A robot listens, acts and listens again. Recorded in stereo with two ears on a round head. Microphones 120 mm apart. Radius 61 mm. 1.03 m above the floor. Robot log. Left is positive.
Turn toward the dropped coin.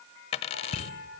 note: The dropped coin: about 45° left or 135° left.
cmd yaw +45
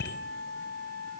cmd idle
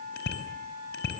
end: I heard a dropped coin, but can't make it out now. It was about straight ahead or 90° left.